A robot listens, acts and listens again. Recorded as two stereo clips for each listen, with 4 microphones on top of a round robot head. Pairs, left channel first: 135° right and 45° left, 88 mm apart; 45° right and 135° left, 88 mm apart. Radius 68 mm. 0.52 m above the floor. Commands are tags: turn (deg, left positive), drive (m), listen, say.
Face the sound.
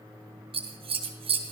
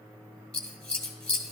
<turn deg="35"/>
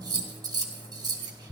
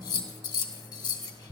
<say>Found it: scissors, straight ahead.</say>